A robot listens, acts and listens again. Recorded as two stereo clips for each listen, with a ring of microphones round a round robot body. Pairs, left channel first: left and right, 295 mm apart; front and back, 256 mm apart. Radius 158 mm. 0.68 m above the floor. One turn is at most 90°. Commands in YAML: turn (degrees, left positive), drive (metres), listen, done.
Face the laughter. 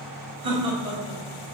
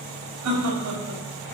turn: -90
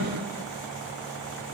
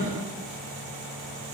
turn: -70
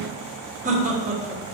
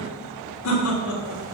turn: -25
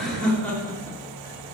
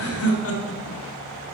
done: "Facing the laughter."